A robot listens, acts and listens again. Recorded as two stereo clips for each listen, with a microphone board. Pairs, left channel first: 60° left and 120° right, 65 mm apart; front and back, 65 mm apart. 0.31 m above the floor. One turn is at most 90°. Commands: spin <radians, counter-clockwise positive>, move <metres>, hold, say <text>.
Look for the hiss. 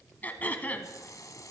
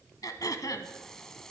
spin 1.40
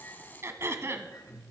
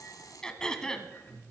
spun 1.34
say Facing the hiss, 1 to 2 m away.